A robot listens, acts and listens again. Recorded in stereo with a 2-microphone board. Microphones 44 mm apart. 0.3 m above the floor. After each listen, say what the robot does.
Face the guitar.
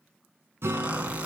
Turn 70° right.
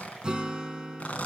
Turn 20° right.
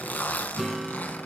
Found it: a guitar, straight ahead, 2 to 4 m away.